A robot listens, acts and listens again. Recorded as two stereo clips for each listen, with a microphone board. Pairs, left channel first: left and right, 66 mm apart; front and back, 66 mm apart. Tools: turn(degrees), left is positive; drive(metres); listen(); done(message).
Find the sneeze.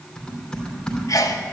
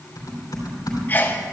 turn(degrees=60)
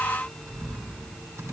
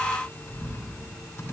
done("Facing where the sneeze came from. I can't hear it now.")